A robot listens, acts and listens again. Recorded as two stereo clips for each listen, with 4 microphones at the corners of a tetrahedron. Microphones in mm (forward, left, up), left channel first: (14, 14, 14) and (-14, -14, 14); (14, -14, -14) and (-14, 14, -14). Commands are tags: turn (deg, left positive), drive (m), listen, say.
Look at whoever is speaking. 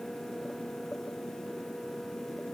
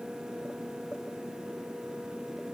<listen/>
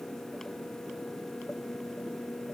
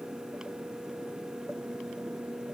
<listen/>
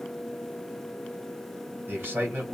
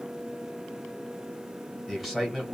<turn deg="-130"/>
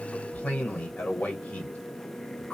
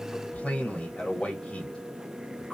<say>Found it: a man speaking, straight ahead.</say>